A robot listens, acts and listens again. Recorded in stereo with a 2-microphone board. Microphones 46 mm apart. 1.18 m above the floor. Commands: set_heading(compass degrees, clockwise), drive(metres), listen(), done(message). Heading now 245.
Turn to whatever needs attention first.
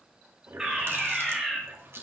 set_heading(275)
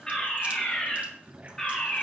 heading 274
set_heading(259)
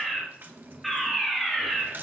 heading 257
done("Found it: a fire alarm, straight ahead, 2 to 4 m away.")